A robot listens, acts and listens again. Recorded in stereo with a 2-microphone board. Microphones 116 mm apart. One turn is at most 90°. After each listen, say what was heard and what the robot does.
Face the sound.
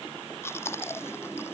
The chewing: about 20° left or 160° left. Turn 20° left.
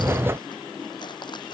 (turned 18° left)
So it is at 140° left. Turn 90° left.
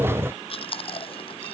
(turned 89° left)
The chewing is now 50° left. Turn 50° left.
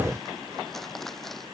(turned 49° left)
Facing the chewing.